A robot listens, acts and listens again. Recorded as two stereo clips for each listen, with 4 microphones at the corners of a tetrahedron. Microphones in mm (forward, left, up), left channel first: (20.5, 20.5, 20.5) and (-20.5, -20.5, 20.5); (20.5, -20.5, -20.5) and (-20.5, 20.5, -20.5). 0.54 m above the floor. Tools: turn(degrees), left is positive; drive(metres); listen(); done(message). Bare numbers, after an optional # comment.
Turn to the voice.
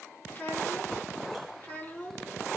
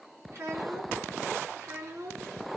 # The child speaking: 105° left.
turn(105)
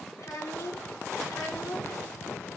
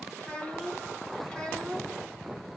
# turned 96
# The child speaking is now 30° left.
turn(30)
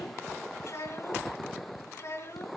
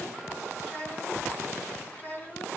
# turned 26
# The child speaking is now 10° left.
turn(10)
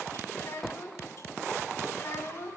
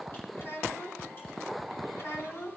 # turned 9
done("Facing the child speaking.")